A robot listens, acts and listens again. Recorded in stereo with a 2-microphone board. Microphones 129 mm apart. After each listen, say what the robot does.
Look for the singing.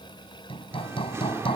Turn 20° right.
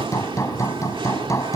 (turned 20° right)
Turn 140° right.
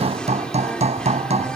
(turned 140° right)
Facing the singing.